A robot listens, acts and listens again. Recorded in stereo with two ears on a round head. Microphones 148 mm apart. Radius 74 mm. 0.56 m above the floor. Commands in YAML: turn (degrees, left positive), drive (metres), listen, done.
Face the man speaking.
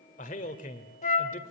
turn: 50
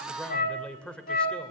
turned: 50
done: "Facing the man speaking, 2 to 4 m away."